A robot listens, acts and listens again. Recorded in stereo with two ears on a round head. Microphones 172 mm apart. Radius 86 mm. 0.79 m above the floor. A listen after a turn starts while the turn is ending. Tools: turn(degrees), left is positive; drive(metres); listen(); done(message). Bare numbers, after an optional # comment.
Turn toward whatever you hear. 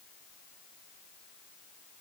listen()
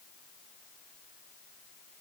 listen()
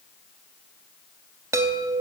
# The chime: about 15° right or 165° right.
turn(-15)
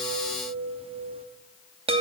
# So it is at 150° right.
turn(-150)
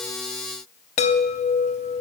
# The chime is now 40° left.
turn(40)
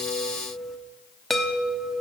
done("Found it: a chime, straight ahead, under 1 m away.")